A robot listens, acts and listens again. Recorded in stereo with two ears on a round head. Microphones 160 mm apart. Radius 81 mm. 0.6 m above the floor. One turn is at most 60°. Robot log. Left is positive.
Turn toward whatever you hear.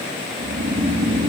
note: The snoring: about 70° right or 110° right.
cmd yaw -60
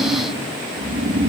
note: So it is at 50° right.
cmd yaw -50
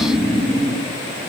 end: Found it: snoring, straight ahead.